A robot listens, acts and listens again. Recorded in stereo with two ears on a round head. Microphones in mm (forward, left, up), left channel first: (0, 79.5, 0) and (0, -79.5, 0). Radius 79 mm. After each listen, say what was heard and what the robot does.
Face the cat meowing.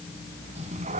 The cat meowing: about 40° right or 140° right. Turn 40° right.
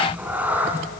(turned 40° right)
So it is at 10° right. Turn 10° right.
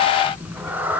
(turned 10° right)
The cat meowing is now 10° right. Turn 10° right.
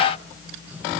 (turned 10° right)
Keep listening.
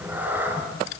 The cat meowing is now 10° right. Turn 10° right.
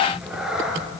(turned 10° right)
Facing the cat meowing.